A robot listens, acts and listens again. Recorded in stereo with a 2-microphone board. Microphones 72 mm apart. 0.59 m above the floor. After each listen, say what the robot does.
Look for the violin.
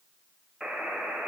Keep listening.
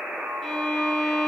Turn 30° left.
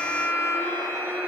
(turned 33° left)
Turn 145° left.
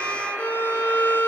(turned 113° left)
Turn 30° left.
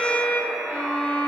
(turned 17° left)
Turn 15° left.
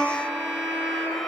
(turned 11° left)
Facing the violin, 1 to 2 m away.